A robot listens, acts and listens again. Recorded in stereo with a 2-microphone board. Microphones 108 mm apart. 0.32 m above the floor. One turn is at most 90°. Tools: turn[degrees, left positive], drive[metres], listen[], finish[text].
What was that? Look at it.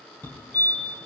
Thought: The fire alarm: about 15° left or 165° left.
Action: turn[15]
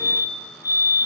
Thought: So it is at 150° left.
Action: turn[90]
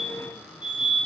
Thought: The fire alarm is now 50° left.
Action: turn[50]
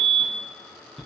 Action: finish[Facing the fire alarm.]